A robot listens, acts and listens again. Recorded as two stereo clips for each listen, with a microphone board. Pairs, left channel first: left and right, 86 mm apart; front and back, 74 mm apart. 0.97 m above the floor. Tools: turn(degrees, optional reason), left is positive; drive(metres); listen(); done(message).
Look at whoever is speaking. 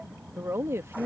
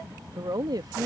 turn(degrees=-150, reason="The woman speaking: 150° right.")
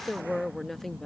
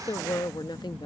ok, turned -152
done("Found it: a woman speaking, straight ahead.")